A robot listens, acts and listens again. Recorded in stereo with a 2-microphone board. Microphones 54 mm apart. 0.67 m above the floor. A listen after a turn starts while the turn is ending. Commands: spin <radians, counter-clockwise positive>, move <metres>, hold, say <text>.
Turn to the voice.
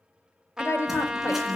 spin 0.96
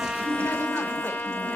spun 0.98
hold
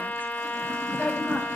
hold
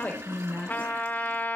spin 0.52
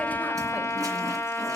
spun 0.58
hold
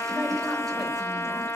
hold
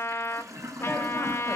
say Facing where the woman speaking came from. I can't hear it now.